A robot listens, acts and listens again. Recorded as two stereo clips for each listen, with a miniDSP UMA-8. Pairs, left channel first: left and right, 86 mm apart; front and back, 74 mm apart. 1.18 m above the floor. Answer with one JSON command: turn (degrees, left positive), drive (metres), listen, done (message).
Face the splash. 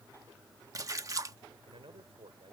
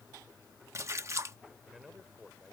{"turn": -135}
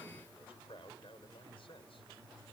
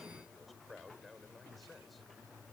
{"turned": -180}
{"turn": 45}
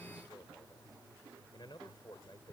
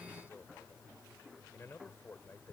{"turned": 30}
{"turn": 15}
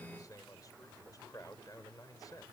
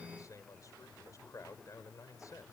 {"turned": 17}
{"done": "I heard a splash from this way, but can't make it out now."}